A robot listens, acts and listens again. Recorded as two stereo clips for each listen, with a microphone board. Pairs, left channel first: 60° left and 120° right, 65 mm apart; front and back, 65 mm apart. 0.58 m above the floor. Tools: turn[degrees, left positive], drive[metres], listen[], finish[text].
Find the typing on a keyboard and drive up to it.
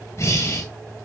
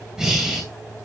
Action: listen[]
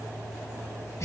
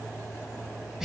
Action: listen[]
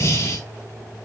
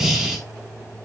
Action: finish[I can't make out typing on a keyboard, only breathing.]